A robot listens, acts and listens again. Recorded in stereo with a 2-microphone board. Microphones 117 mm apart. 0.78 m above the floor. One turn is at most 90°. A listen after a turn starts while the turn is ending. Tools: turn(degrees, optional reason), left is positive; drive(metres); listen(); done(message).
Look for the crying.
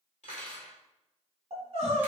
turn(degrees=-70, reason="The crying: about 70° right or 110° right.")
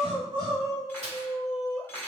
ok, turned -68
turn(degrees=-35, reason="So it is at 35° right.")
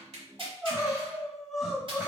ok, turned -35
done("Facing the crying, 1 to 2 m away.")